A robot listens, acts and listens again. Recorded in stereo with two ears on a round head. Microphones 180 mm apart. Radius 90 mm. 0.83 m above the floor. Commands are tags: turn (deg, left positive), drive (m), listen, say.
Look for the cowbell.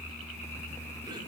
<listen/>
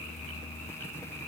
<listen/>
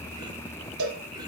<turn deg="-90"/>
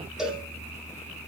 <say>Facing the cowbell.</say>